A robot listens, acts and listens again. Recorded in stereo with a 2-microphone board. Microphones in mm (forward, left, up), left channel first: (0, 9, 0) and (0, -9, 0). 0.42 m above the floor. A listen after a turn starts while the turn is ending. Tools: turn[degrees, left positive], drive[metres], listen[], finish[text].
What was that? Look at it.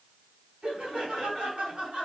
Thought: The laughter: about 65° right or 115° right.
Action: turn[-65]
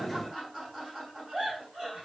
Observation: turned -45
Thought: So it is at 50° right.
Action: turn[-50]
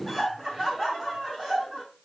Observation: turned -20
Thought: The laughter is now 30° right.
Action: turn[-30]
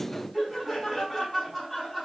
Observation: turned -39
Action: finish[Facing the laughter, 2 to 4 m away.]